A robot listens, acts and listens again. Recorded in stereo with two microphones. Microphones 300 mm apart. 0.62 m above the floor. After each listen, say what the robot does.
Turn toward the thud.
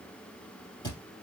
Turn 30° left.
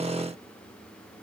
Keep listening.
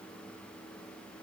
I heard a thud, but can't make it out now. It was about 15° right or 135° left.